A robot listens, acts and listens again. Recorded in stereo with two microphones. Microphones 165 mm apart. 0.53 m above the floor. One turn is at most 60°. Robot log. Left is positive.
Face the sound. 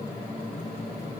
cmd idle
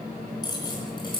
note: The keys jangling: about 30° left or 150° left.
cmd yaw +30
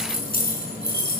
note: So it is at 110° left.
cmd yaw +60
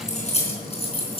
note: The keys jangling is now 35° left.
cmd yaw +35
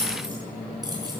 note: The keys jangling is now 25° right.
cmd yaw -25
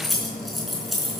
end: Facing the keys jangling, over 4 m away.